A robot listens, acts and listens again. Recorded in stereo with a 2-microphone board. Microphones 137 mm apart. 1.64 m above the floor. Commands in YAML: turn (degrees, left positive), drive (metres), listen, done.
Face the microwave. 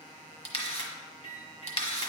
turn: 40
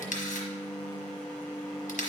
turn: 10
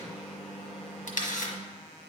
done: "Found it: a microwave, straight ahead, 1 to 2 m away."